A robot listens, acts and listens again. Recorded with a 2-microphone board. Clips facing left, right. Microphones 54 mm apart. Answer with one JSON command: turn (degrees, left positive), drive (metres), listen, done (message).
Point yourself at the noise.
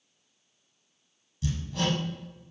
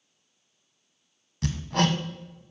{"turn": -65}
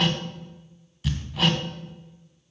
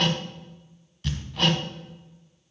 {"done": "Found it: hammering, straight ahead."}